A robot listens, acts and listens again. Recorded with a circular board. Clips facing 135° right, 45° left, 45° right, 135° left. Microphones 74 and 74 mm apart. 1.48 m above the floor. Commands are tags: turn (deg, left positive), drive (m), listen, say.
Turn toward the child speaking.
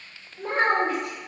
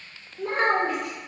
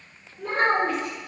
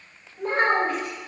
<turn deg="180"/>
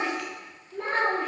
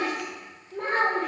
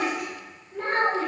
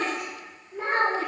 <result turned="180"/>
<turn deg="65"/>
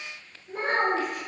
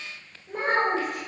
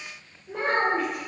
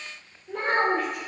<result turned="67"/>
<turn deg="20"/>
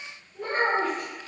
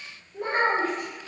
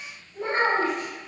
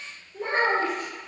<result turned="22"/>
<turn deg="10"/>
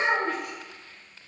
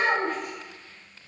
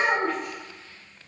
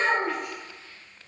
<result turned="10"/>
<say>Found it: a child speaking, straight ahead, 2 to 4 m away.</say>